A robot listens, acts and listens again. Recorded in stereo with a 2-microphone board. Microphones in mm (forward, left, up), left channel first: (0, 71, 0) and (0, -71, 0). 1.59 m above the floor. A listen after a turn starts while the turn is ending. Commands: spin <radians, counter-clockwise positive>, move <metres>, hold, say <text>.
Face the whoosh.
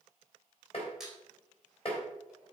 hold
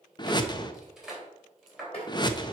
spin 0.52
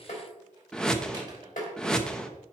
say Facing the whoosh, under 1 m away.